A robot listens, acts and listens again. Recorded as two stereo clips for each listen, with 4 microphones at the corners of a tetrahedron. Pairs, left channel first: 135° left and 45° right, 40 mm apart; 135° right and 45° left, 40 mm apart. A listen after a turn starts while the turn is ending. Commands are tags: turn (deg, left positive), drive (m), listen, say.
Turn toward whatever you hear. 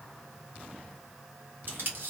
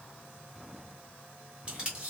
<turn deg="-15"/>
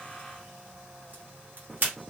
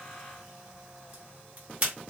<say>Found it: tape being pulled, straight ahead.</say>